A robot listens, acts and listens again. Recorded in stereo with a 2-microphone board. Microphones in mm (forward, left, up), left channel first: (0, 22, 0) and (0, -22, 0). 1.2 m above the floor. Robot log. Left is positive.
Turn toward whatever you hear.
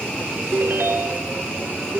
note: The ringtone: about 65° right or 115° right.
cmd yaw -65
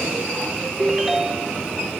end: Found it: a ringtone, straight ahead, 1 to 2 m away.